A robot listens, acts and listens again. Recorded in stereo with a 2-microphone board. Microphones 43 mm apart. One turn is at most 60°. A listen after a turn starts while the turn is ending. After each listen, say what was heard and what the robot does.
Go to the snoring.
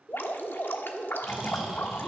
Turn 30° right.
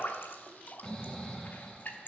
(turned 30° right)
So it is at 20° left. Turn 20° left.
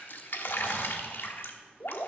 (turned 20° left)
Keep listening.
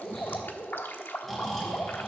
Drive 1.0 m forward.
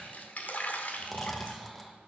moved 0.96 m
Drive 1.0 m forward.
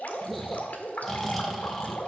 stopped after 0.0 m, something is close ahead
Arrived at the snoring, straight ahead.